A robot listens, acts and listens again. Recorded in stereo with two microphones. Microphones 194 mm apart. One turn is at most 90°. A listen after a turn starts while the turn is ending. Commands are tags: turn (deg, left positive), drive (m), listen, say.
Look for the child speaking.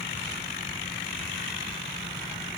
<listen/>
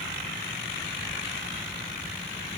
<listen/>
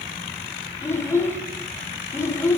<turn deg="30"/>
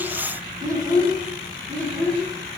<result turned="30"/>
<turn deg="-15"/>
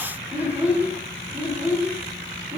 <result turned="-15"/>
<turn deg="-10"/>
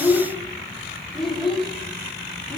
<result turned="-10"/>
<say>Found it: a child speaking, straight ahead.</say>